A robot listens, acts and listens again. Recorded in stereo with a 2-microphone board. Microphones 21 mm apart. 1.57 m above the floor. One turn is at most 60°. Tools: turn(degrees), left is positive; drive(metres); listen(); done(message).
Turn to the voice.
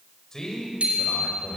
turn(degrees=25)
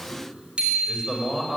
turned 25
done("Facing the man speaking, over 4 m away.")